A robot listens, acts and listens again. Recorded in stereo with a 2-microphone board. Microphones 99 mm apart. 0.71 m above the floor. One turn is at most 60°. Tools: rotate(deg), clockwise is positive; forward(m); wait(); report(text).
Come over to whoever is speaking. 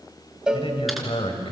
rotate(-60)
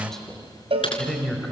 forward(1.0)
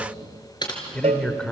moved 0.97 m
rotate(-10)
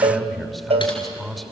forward(1.0)
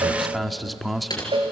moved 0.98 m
forward(1.0)
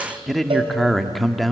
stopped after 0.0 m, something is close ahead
report("Arrived at the man speaking, straight ahead.")